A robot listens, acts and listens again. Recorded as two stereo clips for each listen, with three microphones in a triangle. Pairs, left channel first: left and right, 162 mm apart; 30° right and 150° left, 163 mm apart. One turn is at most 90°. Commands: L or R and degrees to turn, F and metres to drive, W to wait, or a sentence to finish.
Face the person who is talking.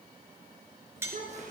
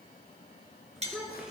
R90
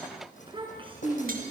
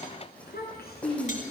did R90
R35
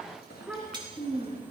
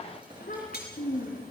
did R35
R10
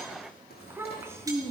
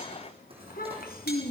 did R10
R20
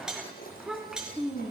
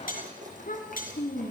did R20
Facing the child speaking.